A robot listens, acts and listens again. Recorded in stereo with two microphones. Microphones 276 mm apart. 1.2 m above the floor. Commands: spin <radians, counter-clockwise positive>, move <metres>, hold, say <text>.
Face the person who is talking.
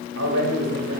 spin -1.22
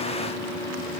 hold
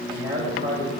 spin -0.70
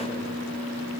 hold
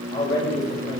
spin 0.26
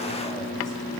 hold
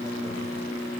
hold
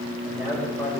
say Found it: a man speaking, straight ahead, over 4 m away.